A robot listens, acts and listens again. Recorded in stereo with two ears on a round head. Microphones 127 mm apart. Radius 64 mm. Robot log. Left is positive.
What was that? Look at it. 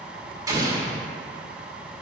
note: The explosion: about 25° right or 155° right.
cmd yaw -25
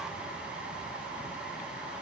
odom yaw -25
cmd idle
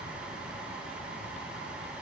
end: I heard an explosion, but can't make it out now. It was about straight ahead or 130° right.